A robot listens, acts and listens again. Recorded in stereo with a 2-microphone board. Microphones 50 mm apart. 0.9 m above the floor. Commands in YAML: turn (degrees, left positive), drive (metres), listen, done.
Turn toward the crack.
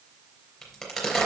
turn: 30
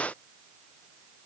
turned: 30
listen: true
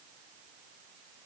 done: "I heard a crack, but can't make it out now. It was about 30° right or 150° left."